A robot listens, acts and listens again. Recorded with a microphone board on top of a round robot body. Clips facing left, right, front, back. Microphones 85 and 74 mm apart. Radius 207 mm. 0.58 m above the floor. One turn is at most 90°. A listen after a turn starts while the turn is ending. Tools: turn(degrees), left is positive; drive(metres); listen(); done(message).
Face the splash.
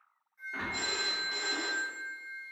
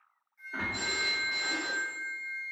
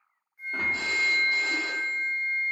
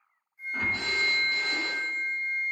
done("Found it: a splash, straight ahead.")